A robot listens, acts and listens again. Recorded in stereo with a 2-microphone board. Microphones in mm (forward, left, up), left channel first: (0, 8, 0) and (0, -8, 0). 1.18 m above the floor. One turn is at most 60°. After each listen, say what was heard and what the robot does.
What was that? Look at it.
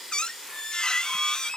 The squeak: about 60° left or 120° left. Turn 60° left.
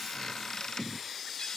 So it is at 50° left. Turn 50° left.
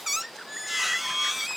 The squeak is now 15° right. Turn 15° right.
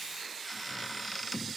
Found it: a squeak, straight ahead.